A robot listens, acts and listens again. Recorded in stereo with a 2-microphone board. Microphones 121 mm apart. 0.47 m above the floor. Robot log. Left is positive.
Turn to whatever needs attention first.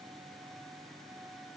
cmd idle
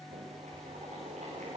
cmd idle
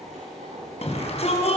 note: The shout: about 60° left or 120° left.
cmd yaw +60
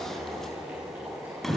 end: Found it: a shout, straight ahead.